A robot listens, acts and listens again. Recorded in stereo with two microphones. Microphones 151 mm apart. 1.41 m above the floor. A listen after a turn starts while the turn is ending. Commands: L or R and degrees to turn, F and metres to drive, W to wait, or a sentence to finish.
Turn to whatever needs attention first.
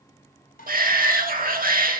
R70
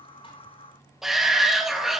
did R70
Facing the shout, 2 to 4 m away.